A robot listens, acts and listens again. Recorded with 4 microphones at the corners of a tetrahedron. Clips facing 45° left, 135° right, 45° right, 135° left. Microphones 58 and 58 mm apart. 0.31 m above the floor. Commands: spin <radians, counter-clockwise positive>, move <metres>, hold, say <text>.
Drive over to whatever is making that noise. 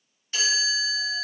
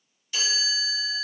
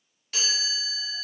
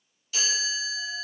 spin -0.17
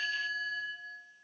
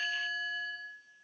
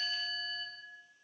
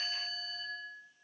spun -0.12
move 1.0
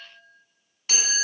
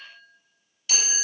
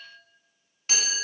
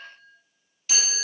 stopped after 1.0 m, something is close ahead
say Arrived at the chime, straight ahead.